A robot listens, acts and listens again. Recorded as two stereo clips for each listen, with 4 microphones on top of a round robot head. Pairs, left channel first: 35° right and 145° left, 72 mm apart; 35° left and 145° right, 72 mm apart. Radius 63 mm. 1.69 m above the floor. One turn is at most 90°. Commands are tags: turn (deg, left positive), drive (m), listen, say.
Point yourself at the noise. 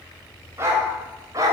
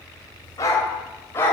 <turn deg="90"/>
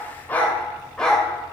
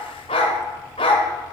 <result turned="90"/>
<turn deg="45"/>
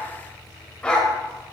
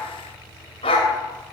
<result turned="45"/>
<turn deg="45"/>
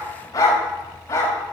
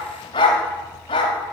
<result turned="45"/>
<turn deg="20"/>
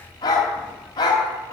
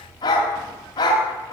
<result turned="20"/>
<say>Facing the dog barking.</say>